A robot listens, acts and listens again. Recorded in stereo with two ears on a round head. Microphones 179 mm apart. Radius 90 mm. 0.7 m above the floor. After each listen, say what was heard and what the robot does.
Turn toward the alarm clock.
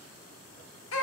Keep listening.
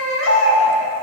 Keep listening.
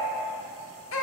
I can't make out an alarm clock, only a baby crying.